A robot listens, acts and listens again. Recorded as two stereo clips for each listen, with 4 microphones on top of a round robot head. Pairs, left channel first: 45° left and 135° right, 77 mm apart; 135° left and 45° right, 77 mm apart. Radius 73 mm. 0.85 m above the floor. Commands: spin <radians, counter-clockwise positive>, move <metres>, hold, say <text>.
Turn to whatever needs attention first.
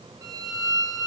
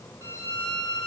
hold
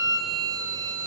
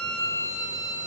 hold
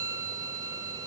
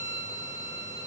say I can't make out anything urgent, only a violin.